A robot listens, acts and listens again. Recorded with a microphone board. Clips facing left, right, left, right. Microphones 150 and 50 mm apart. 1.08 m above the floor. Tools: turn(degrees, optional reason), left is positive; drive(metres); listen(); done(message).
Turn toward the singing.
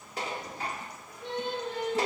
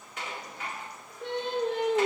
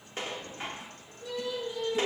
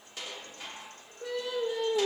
turn(degrees=-75, reason="The singing: about 75° right or 105° right.")
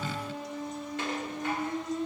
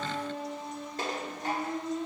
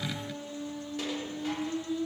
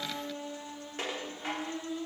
turn(degrees=-30, reason="So it is at 30° right.")
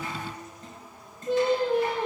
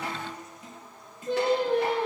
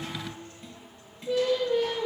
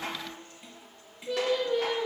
turn(degrees=10, reason="The singing is now 10° left.")
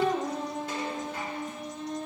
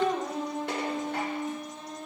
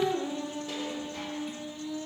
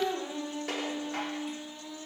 done("Found it: singing, straight ahead, over 4 m away.")